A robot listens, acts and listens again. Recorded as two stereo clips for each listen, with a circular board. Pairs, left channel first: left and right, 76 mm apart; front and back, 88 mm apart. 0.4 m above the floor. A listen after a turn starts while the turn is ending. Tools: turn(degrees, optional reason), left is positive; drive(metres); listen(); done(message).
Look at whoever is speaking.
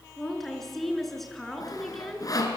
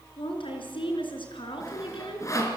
done("Facing the woman speaking, over 4 m away.")